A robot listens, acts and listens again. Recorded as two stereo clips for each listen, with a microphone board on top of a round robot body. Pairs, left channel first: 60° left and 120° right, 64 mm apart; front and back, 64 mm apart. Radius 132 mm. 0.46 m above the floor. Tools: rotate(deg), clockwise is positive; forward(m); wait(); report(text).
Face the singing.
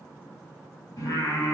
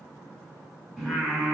rotate(-95)
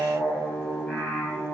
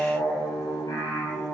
rotate(15)
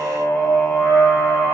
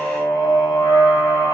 report("Found it: singing, straight ahead.")